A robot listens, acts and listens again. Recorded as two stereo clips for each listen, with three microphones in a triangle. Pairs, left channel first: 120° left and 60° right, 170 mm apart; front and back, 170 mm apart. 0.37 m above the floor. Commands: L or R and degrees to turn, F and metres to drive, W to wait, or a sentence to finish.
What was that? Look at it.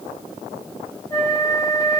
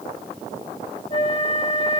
L50
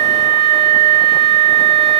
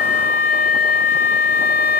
R10
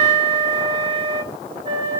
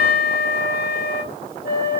Found it: a flute, straight ahead.